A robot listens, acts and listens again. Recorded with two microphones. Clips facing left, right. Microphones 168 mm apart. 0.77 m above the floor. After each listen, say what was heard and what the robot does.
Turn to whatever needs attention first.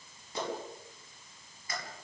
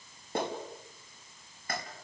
Keep listening.
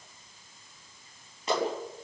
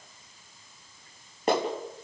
Keep listening.
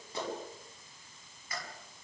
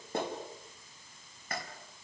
I can't make out anything urgent, only a clap.